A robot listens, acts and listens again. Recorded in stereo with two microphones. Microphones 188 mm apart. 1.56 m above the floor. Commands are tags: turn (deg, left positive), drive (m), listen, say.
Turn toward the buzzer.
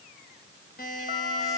<turn deg="50"/>
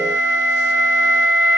<listen/>
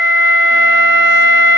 <listen/>
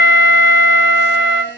<turn deg="80"/>
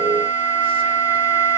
<listen/>
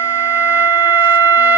<listen/>
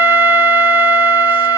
<say>I heard a buzzer from this way, but can't make it out now.</say>